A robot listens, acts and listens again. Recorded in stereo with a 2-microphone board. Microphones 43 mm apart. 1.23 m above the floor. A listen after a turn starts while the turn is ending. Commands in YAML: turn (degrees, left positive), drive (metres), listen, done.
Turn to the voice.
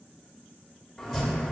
listen: true
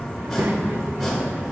turn: -55
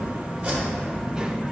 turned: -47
turn: -15
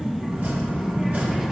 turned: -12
done: "Facing the child speaking."